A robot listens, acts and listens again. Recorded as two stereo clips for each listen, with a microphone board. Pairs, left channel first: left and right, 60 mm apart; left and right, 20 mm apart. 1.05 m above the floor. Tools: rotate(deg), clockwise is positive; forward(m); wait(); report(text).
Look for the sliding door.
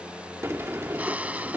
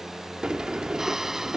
rotate(45)
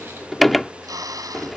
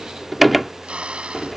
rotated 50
report("Facing the sliding door.")